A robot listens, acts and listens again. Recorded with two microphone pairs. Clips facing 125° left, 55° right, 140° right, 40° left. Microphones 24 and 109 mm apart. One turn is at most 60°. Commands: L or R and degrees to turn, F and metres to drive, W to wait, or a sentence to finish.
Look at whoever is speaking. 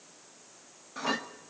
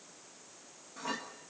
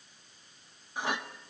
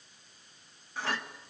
W
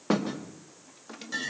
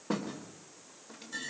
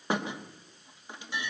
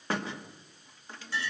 W
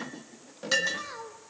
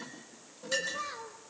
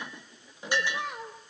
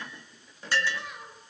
R60
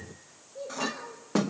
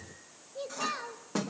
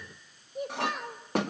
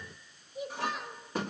R60
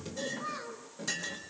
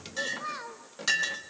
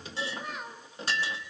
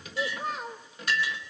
R15
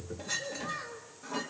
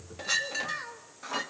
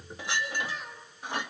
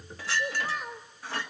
Found it: a child speaking, straight ahead.